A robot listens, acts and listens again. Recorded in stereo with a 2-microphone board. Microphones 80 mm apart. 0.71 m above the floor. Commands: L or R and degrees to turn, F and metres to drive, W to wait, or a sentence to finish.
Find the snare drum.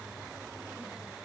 W
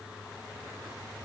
W
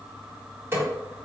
R30
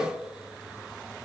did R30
W
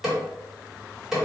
Facing the snare drum.